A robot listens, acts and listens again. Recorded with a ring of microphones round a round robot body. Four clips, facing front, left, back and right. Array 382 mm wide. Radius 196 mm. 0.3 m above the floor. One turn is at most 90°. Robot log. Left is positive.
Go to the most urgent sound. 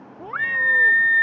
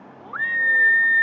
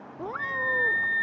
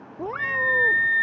note: The scream: 15° right.
cmd yaw -15
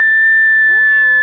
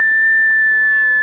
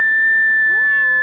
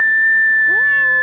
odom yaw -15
cmd fwd 1.0
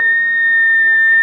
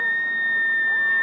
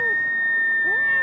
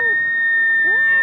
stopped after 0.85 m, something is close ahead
end: Arrived at the scream, straight ahead.